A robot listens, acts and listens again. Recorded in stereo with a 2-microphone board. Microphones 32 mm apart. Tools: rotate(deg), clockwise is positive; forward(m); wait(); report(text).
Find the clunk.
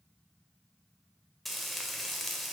wait()
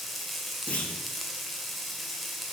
rotate(-45)
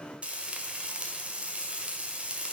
wait()
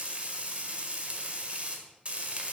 report("I heard a clunk, but can't make it out now. It was about straight ahead or 90° left.")